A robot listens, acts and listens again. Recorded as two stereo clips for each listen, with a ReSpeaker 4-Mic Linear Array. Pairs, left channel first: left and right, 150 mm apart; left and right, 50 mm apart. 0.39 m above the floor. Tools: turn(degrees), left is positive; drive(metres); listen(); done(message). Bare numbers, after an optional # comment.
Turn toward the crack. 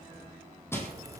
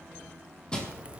# The crack: about 20° right or 160° right.
turn(-20)
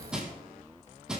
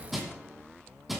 listen()
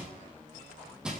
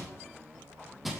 done("I heard a crack, but can't make it out now. It was about straight ahead or 140° right.")